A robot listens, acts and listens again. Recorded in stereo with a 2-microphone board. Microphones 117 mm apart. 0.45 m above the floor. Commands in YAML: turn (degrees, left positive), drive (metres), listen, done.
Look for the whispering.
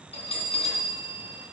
listen: true
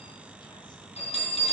listen: true
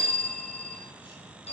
done: "I can't make out whispering to turn to."